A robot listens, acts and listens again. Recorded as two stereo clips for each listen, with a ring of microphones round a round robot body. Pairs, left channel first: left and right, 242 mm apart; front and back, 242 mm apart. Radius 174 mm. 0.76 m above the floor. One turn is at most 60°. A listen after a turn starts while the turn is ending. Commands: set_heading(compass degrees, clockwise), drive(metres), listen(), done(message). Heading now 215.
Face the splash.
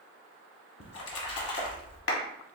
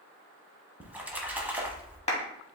set_heading(155)
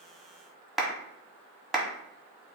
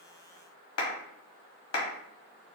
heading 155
set_heading(115)
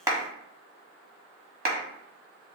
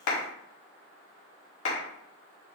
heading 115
done("Facing where the splash came from. I can't hear it now.")